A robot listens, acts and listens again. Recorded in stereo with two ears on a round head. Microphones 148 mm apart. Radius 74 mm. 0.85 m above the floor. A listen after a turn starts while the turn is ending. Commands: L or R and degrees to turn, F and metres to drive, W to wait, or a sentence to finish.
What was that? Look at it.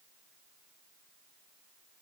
W
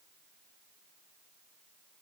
W
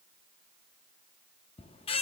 L35
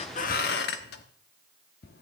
L110
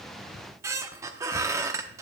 R20
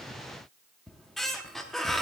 Found it: a squeak, straight ahead, under 1 m away.